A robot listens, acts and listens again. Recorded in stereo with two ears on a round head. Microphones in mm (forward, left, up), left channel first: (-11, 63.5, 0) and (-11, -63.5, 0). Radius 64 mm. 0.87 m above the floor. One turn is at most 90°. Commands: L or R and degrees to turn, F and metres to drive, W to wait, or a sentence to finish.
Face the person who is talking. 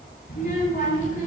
L55
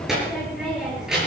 Found it: a child speaking, straight ahead, over 4 m away.